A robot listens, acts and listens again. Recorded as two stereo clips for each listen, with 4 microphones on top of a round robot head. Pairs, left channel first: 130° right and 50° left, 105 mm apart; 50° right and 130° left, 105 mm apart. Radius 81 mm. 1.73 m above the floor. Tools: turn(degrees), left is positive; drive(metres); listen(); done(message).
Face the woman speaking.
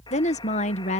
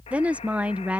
turn(degrees=-150)
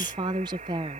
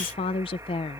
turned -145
done("Found it: a woman speaking, straight ahead.")